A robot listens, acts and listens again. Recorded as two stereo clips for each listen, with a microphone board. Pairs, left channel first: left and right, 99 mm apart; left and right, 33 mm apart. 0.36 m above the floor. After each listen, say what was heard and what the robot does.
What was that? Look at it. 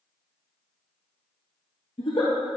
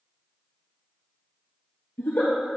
Turn 90° left.
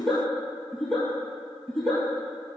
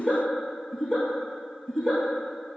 Found it: a giggle, straight ahead, 1 to 2 m away.